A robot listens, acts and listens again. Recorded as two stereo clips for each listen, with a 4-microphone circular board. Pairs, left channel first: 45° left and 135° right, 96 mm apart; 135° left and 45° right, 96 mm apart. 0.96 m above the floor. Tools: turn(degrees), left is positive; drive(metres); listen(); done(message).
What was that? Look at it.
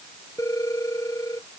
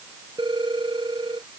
turn(degrees=-10)
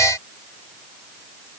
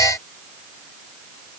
listen()
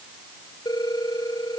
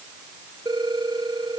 done("Facing the phone ringing.")